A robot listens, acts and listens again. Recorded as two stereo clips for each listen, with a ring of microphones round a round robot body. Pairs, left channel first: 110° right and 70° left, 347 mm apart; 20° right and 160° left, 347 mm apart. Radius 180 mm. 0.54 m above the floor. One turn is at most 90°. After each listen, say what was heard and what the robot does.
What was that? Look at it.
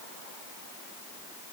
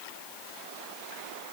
Keep listening.
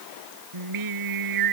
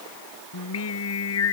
The singing: 30° left. Turn 30° left.
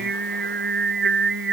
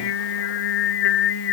Found it: singing, straight ahead.